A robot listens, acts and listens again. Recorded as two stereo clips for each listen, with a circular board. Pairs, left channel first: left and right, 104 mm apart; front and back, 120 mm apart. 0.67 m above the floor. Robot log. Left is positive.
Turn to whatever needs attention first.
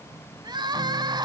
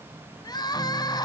note: The crying: 50° right.
cmd yaw -50
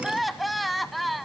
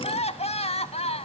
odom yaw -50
end: Facing the crying, under 1 m away.